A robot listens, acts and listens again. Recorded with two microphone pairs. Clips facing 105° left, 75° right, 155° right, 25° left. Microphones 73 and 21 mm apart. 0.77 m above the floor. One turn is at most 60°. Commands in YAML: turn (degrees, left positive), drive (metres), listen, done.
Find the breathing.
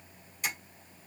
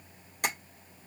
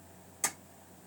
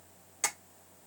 listen: true
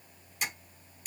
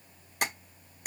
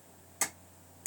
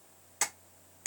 listen: true
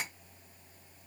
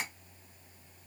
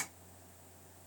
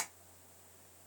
done: "I can't make out breathing, only tapping."